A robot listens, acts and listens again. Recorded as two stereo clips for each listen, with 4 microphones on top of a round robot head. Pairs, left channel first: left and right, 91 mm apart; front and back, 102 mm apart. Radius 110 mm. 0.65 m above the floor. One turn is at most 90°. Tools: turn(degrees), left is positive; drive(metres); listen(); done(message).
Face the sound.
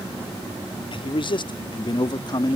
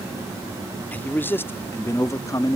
turn(degrees=55)
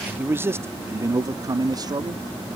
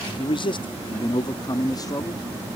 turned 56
turn(degrees=-50)
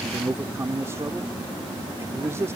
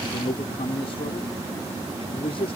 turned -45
turn(degrees=-30)
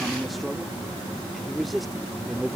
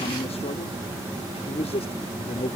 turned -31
done("Facing the man speaking.")